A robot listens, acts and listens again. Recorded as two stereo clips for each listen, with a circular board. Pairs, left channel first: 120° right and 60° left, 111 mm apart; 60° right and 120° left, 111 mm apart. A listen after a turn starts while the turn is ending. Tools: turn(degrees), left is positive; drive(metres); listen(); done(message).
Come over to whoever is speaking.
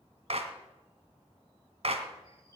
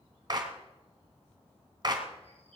listen()
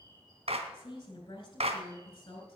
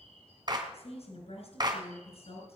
turn(degrees=-70)
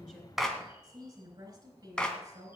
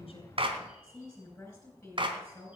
turn(degrees=15)
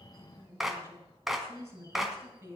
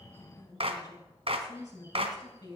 drive(metres=1.0)
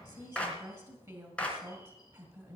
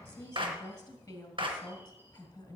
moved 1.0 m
turn(degrees=10)
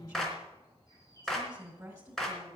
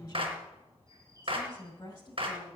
drive(metres=1.0)
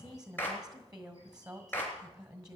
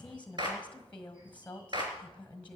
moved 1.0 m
turn(degrees=10)
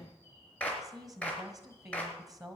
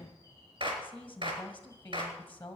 drive(metres=1.0)
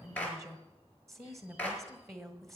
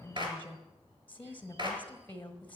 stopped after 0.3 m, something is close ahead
turn(degrees=10)
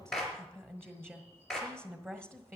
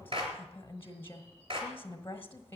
done("Arrived at the woman speaking, straight ahead.")